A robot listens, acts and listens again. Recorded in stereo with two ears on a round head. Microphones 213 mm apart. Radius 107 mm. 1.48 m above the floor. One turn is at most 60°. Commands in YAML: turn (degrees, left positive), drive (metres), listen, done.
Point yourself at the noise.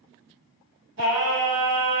turn: -55
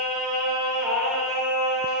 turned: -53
done: "Facing the singing."